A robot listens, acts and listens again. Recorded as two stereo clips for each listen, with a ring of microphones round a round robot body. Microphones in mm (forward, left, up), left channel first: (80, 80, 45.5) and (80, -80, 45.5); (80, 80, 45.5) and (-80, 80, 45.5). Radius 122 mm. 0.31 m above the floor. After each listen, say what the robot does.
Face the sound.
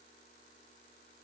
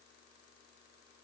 Keep listening.
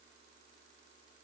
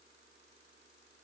Keep listening.
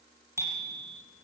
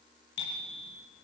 Turn 15° right.
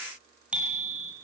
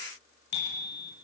Found it: a bicycle bell, straight ahead, over 4 m away.